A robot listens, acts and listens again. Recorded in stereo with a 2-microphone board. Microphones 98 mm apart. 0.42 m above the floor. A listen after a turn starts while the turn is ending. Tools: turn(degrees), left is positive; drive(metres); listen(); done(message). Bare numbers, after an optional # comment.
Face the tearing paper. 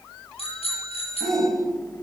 listen()
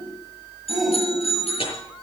# The tearing paper: about 65° left or 115° left.
turn(65)
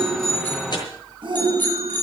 listen()
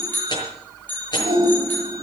# So it is at 50° left.
turn(50)
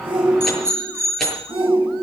listen()
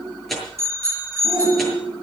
done("Facing the tearing paper.")